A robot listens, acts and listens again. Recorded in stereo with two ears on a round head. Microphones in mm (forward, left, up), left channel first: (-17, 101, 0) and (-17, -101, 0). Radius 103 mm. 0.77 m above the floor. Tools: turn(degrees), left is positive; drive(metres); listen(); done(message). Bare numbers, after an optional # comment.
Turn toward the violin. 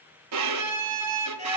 # The violin: about 75° right or 105° right.
turn(-75)
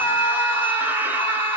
listen()
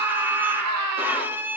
# So it is at 10° right.
turn(-10)
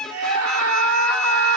done("Found it: a violin, straight ahead, under 1 m away.")